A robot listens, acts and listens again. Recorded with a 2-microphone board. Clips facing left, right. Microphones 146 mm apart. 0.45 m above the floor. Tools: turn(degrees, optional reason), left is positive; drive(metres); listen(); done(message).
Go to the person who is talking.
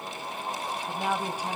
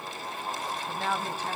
turn(degrees=30)
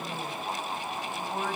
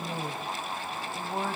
turn(degrees=-20, reason="So it is at 20° right.")
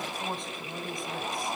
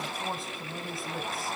drive(metres=1.0)
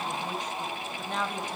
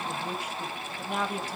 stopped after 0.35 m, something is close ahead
turn(degrees=-10, reason="The woman speaking is now 10° right.")
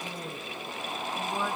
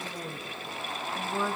done("Blocked. The woman speaking is further on, straight ahead.")